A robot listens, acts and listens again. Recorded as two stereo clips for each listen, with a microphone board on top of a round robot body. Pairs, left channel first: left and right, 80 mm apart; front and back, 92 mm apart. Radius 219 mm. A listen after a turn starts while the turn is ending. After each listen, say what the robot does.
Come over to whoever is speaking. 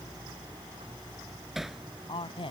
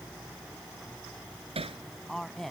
Turn 90° left.
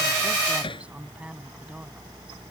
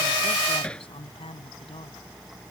Turn 15° right.
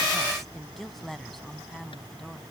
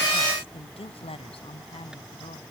Drive 1.0 m forward.
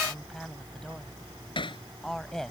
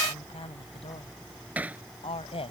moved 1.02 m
Drive 1.0 m forward.
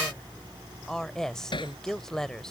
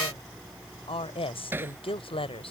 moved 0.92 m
Drive 1.0 m forward.
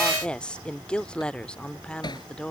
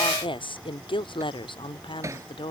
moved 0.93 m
Turn 10° left.
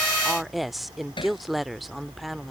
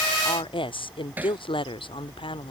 Drive 1.0 m forward.
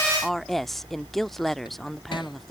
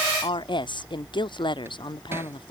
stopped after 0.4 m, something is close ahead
Arrived at the woman speaking, straight ahead.